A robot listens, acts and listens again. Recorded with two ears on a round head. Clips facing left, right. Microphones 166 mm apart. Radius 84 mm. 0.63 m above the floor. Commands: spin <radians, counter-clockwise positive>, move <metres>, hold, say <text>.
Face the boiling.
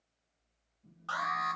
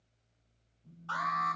hold
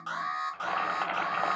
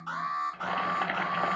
spin -0.52
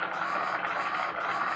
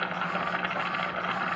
spin -2.36
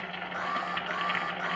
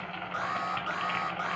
spin 0.17
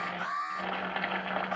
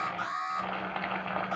say Found it: boiling, straight ahead, under 1 m away.